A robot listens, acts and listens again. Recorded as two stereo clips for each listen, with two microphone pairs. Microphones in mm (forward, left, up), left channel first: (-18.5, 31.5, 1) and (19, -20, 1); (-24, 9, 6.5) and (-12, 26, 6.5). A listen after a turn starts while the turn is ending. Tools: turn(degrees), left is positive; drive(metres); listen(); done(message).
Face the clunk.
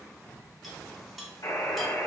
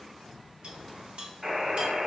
listen()
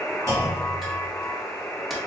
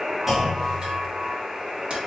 turn(degrees=-30)
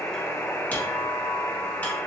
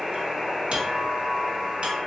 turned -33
done("Facing where the clunk came from. I can't hear it now.")